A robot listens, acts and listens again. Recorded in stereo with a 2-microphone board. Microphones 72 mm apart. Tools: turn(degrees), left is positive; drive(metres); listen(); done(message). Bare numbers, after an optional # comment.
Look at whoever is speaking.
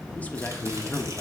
# The man speaking: about 20° left or 160° left.
turn(20)
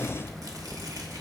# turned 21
listen()
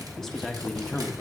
done("Found it: a man speaking, straight ahead, under 1 m away.")